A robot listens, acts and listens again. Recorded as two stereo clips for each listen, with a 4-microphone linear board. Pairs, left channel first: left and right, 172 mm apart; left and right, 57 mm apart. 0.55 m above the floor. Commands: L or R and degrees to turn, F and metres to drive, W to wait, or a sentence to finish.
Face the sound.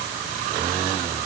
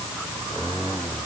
W
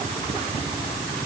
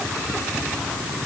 W
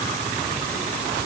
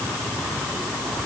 I can't make out anything.